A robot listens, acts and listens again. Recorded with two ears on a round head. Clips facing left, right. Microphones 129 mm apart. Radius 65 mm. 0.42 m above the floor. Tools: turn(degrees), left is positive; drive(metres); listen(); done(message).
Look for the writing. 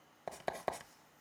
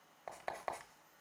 turn(degrees=35)
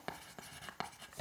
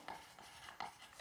turn(degrees=105)
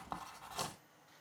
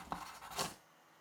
done("Found it: writing, straight ahead, under 1 m away.")